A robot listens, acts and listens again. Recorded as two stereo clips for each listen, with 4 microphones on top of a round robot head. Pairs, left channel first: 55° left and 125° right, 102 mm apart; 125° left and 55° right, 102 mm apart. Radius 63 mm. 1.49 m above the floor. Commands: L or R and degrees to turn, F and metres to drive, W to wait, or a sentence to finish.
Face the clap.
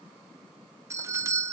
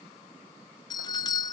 W
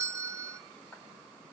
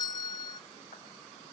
W
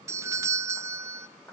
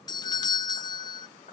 I can't make out a clap to turn to.